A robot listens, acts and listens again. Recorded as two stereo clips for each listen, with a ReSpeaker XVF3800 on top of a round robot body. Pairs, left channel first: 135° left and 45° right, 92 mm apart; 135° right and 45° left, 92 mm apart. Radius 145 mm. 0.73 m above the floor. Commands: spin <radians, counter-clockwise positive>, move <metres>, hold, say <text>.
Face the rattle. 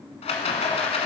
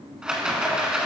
spin 2.27
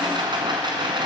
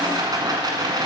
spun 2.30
say Found it: a rattle, straight ahead, 1 to 2 m away.